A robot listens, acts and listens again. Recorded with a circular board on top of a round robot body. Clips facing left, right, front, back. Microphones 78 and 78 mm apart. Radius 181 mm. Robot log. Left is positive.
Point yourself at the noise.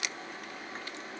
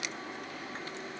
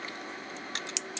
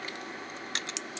cmd idle
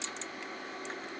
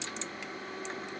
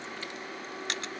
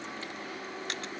cmd idle
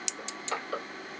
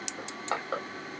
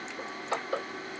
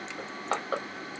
note: The crushing: 150° right.
cmd yaw -150
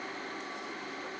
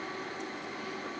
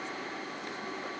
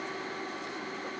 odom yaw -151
cmd idle
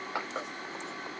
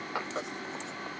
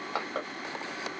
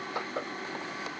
end: Found it: crushing, straight ahead.